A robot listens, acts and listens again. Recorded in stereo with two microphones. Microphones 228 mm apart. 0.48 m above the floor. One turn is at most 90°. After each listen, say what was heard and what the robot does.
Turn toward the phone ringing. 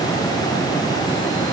Keep listening.
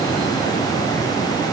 Keep listening.
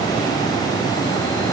I can't make out a phone ringing.